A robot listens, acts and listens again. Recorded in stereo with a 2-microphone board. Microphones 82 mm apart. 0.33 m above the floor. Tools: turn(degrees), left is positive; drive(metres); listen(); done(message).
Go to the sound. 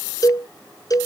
turn(degrees=50)
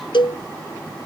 turn(degrees=80)
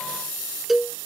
drive(metres=1.0)
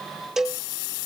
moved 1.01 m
drive(metres=1.0)
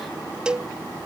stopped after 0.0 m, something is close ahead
turn(degrees=-10)
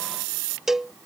done("I am next to the cowbell.")